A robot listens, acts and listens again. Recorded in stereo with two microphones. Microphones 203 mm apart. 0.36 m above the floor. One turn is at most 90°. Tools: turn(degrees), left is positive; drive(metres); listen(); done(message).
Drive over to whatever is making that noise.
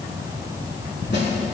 listen()
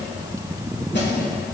turn(degrees=65)
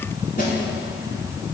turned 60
turn(degrees=50)
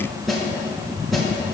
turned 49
drive(metres=1.0)
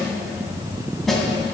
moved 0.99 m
drive(metres=1.0)
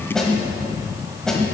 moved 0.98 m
drive(metres=1.0)
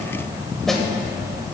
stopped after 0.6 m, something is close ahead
done("Arrived at the snare drum, straight ahead.")